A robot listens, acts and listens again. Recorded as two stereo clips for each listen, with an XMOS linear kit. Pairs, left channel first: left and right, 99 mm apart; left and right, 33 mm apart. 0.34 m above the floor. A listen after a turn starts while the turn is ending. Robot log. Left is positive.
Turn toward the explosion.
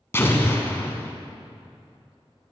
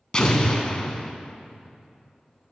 note: The explosion: about 25° left or 155° left.
cmd yaw +25
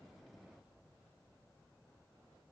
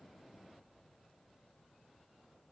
cmd idle
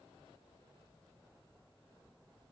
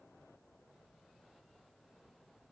end: I heard an explosion, but can't make it out now. It was about straight ahead or 130° left.